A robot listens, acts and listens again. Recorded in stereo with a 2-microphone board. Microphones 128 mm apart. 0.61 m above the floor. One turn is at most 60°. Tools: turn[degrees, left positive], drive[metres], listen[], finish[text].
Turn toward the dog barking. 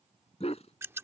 Thought: The dog barking: about 55° left or 125° left.
Action: turn[55]
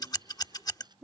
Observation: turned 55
Action: finish[Found it: a dog barking, straight ahead.]